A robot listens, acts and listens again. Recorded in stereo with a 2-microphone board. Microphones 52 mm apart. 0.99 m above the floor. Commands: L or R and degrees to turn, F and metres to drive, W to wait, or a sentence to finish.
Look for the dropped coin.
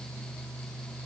W
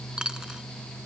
R30
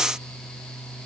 W
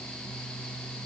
I heard a dropped coin, but can't make it out now. It was about 15° left or 135° right.